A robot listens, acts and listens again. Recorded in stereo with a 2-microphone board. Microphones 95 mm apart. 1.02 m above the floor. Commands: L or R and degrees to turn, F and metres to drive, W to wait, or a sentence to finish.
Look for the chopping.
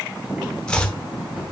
L30
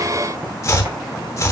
L135
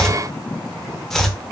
Facing the chopping.